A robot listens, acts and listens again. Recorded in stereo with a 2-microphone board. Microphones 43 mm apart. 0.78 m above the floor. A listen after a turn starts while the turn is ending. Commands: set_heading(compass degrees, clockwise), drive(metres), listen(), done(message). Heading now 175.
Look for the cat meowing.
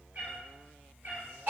set_heading(230)
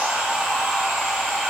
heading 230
listen()
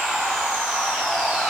listen()
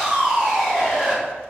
done("I heard a cat meowing, but can't make it out now. It was about straight ahead or 70° right.")